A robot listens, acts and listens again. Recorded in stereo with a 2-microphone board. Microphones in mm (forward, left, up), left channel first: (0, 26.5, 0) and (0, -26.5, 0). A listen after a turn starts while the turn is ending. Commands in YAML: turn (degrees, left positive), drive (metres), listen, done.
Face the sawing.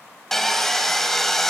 turn: 30
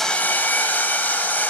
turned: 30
turn: 145
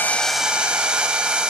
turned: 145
turn: -20
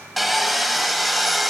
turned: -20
done: "Found it: sawing, straight ahead."